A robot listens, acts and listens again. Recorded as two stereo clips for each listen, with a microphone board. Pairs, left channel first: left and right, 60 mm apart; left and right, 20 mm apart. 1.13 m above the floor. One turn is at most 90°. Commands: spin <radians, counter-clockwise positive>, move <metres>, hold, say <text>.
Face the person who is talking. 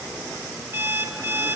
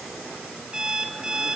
hold
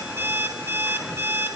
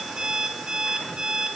hold
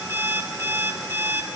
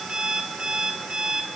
say I can't make out anyone speaking to turn to.